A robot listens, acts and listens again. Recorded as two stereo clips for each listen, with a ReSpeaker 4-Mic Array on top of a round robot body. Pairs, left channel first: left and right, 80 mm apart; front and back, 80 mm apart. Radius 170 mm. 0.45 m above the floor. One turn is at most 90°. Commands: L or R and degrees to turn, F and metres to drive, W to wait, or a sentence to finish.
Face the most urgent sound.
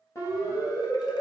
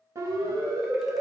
L90
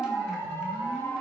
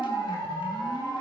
L30
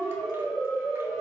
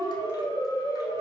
L10
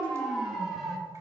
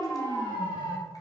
Found it: a siren, straight ahead.